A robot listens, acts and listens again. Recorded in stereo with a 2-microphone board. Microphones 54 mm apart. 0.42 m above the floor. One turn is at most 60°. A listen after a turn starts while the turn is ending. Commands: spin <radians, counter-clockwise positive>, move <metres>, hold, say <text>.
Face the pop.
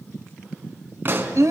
spin -0.70
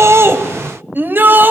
hold
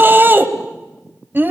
say I heard a pop, but can't make it out now. It was about straight ahead or 100° right.